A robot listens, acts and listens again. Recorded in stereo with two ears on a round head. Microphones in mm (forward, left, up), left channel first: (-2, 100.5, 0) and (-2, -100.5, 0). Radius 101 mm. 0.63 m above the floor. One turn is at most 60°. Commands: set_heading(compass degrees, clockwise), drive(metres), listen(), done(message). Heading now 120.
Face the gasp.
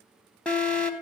listen()
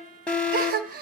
set_heading(160)
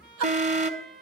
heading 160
listen()
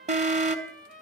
done("I heard a gasp, but can't make it out now. It was about straight ahead or 100° right.")